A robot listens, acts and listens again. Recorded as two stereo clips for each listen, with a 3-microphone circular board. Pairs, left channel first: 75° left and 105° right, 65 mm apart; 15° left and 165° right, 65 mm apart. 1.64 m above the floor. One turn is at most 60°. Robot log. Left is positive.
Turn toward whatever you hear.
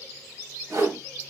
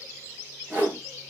note: The whoosh: 105° right.
cmd yaw -60
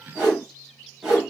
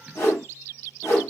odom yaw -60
note: The whoosh is now 30° right.
cmd yaw -30
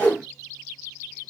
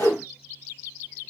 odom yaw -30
end: Facing the whoosh.